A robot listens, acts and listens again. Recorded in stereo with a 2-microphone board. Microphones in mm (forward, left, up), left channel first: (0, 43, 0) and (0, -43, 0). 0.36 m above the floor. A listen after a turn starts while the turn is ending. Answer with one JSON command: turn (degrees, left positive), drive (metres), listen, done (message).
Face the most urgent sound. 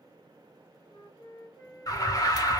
{"turn": 50}
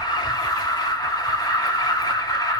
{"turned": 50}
{"turn": 65}
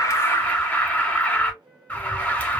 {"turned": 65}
{"turn": 20}
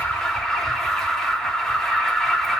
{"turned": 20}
{"done": "Facing the alarm."}